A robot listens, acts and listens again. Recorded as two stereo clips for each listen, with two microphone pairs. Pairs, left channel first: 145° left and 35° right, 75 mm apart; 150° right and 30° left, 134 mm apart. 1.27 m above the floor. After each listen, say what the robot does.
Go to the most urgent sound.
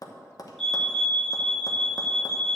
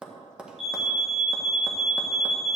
Turn 60° left.
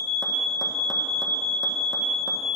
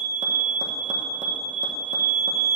Drive 1.0 m forward.
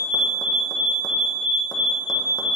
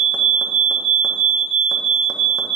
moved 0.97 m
Turn 10° left.
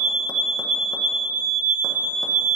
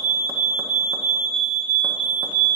Drive 1.0 m forward.
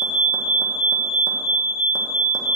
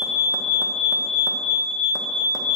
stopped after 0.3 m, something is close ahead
Arrived at the fire alarm, straight ahead.